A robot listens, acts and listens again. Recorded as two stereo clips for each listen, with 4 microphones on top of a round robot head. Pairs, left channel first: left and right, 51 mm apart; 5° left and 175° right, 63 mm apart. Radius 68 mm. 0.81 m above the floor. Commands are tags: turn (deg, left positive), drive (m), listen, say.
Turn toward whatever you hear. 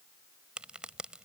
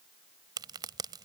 <turn deg="-165"/>
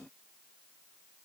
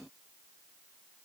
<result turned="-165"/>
<say>Facing where the crack came from. I can't hear it now.</say>